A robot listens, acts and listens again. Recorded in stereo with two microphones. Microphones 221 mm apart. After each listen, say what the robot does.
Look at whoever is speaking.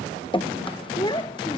Turn 20° left.
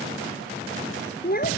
Turn 140° left.
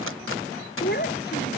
Turn 45° left.
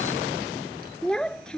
Found it: a child speaking, straight ahead.